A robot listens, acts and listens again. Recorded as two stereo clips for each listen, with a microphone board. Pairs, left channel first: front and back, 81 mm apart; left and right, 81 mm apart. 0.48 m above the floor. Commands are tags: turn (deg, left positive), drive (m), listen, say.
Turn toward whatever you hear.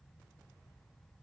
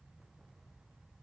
<listen/>
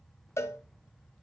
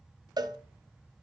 <turn deg="-55"/>
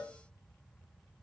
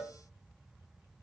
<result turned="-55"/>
<say>Found it: a cowbell, straight ahead.</say>